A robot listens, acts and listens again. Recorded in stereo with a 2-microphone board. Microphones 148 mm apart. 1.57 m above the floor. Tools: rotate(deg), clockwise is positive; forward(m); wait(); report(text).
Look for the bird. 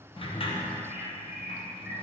rotate(30)
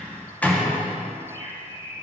rotate(145)
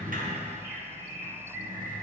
rotate(20)
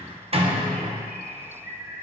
report("Facing the bird.")